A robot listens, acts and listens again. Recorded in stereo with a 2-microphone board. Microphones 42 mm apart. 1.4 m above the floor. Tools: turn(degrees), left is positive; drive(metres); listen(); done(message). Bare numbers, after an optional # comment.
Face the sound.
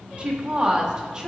# The woman speaking: about 25° right or 155° right.
turn(-25)
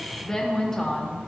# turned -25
# So it is at 20° left.
turn(20)
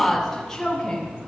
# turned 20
# The woman speaking is now 15° left.
turn(15)
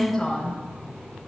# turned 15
# The woman speaking is now 15° left.
turn(15)
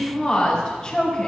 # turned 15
# The woman speaking is now 20° left.
turn(20)
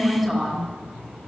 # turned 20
done("Found it: a woman speaking, straight ahead.")